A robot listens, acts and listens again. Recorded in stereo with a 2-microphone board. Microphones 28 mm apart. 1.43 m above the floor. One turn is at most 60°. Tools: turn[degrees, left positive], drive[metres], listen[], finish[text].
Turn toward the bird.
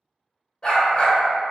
Action: listen[]
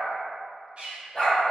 Thought: The bird: about 40° right or 140° right.
Action: turn[-40]
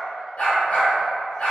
Action: listen[]
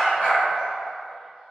Action: listen[]
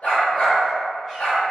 Action: finish[I heard a bird, but can't make it out now. It was about straight ahead or 100° right.]